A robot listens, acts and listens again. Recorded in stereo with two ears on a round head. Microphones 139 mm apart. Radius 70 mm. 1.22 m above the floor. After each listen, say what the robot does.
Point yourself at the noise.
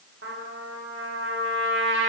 Turn 65° right.
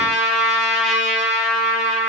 Found it: a trumpet, straight ahead, under 1 m away.